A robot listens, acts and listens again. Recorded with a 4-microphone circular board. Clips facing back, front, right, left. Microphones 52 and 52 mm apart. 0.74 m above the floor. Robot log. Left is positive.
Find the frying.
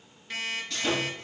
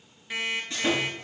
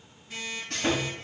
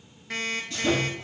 cmd idle
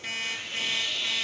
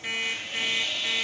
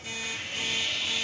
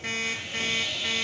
cmd idle
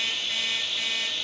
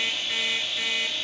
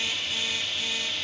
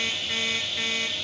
end: I can't make out frying to turn to.